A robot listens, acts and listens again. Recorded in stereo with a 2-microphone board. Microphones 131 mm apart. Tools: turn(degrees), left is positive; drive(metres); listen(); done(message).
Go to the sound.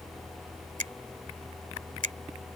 turn(degrees=-90)
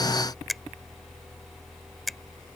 drive(metres=1.0)
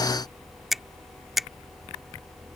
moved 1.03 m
drive(metres=1.0)
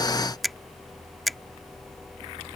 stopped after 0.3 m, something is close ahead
done("I am next to the finger snap.")